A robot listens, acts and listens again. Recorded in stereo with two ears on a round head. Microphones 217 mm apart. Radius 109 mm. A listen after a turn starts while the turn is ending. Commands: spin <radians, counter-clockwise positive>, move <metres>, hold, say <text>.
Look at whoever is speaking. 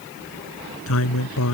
spin 1.13
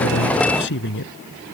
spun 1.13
spin 0.87
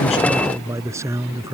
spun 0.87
spin -0.17
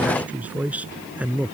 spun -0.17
say Facing the man speaking.